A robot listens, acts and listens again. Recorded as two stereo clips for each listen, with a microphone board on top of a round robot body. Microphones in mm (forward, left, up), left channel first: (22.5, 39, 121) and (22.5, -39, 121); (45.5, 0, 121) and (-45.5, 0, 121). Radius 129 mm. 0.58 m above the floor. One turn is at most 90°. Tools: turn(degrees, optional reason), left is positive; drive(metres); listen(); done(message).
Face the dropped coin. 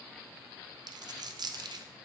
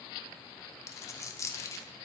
turn(degrees=-60, reason="The dropped coin: 60° right.")
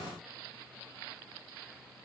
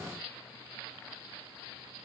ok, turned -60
done("Facing where the dropped coin came from. I can't hear it now.")